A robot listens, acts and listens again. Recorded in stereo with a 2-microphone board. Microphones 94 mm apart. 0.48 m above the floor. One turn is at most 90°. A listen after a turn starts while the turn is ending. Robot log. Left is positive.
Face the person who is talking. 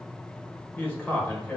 note: The man speaking: about 20° left or 160° left.
cmd yaw +20
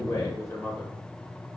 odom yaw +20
note: So it is at 140° left.
cmd yaw +90
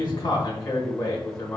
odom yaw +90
note: The man speaking is now 40° left.
cmd yaw +40
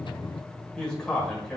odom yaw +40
note: The man speaking is now 10° left.
cmd yaw +10
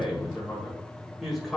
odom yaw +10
end: Found it: a man speaking, straight ahead.